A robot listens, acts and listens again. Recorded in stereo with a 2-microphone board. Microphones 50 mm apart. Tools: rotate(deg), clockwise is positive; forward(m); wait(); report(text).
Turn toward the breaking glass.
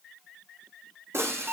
rotate(60)
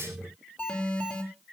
wait()
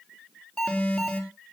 report("I heard breaking glass, but can't make it out now. It was about straight ahead or 60° right.")